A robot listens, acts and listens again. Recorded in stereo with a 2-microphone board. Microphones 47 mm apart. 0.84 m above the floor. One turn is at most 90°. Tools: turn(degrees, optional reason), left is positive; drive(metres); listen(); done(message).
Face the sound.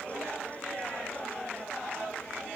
listen()
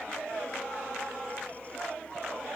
listen()
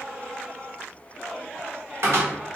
turn(degrees=-60, reason="The cupboard door: about 60° right or 120° right.")
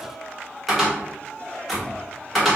done("Found it: a cupboard door, straight ahead.")